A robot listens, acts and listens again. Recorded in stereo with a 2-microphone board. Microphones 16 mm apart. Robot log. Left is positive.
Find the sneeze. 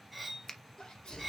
note: The sneeze: about 65° left or 115° left.
cmd yaw +65
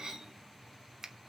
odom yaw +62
cmd idle
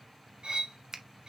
end: I heard a sneeze, but can't make it out now. It was about straight ahead or 55° left.